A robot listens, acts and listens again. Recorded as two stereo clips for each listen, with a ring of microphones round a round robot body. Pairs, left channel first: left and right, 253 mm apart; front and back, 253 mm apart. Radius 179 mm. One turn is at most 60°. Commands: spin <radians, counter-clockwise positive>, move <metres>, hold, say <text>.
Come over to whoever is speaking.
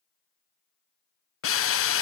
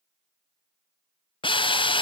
hold
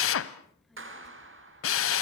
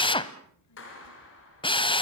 move 1.0
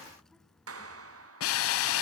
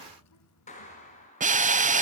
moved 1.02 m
move 1.0
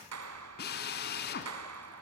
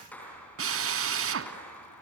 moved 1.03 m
hold
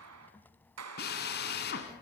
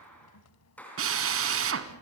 move 1.0
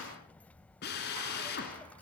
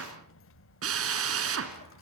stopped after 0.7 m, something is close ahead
say Arrived at the child speaking, straight ahead.